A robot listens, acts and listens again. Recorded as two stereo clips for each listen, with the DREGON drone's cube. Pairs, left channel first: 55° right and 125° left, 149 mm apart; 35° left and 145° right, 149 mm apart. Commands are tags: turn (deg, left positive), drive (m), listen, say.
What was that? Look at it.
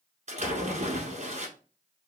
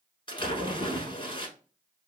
<turn deg="90"/>
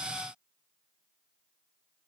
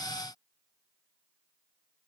<say>I heard a splash from this way, but can't make it out now.</say>